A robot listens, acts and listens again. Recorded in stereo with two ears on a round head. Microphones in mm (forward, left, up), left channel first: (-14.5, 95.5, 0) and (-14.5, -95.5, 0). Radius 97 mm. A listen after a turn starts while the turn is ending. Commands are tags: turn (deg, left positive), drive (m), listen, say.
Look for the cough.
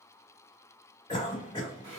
<turn deg="25"/>
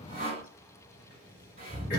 <turn deg="130"/>
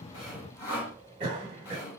<turn deg="-25"/>
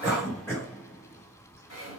<turn deg="10"/>
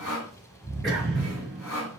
<say>Found it: a cough, straight ahead.</say>